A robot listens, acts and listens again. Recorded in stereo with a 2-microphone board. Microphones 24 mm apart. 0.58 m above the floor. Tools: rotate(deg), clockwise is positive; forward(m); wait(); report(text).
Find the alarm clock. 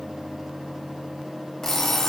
rotate(-15)
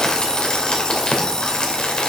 rotate(-150)
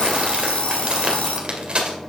rotate(-55)
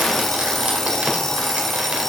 rotate(-15)
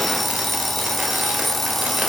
report("Found it: an alarm clock, straight ahead.")